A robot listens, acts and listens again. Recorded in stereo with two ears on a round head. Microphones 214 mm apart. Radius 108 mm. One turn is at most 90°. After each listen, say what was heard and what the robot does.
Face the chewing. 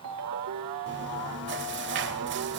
The chewing: about 50° right or 130° right. Turn 50° right.
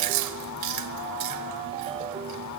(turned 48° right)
So it is at 80° right. Turn 80° right.
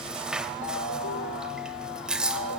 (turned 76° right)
Found it: chewing, straight ahead.